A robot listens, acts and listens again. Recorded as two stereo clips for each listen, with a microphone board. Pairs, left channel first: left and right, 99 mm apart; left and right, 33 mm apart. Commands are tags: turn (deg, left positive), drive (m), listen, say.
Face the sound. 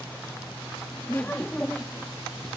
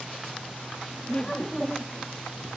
<turn deg="30"/>
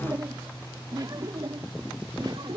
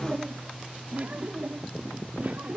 <turn deg="-50"/>
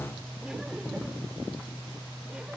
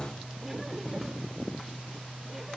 <listen/>
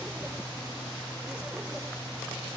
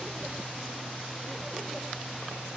<listen/>
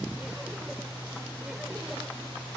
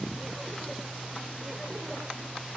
<say>I heard laughter from this way, but can't make it out now.</say>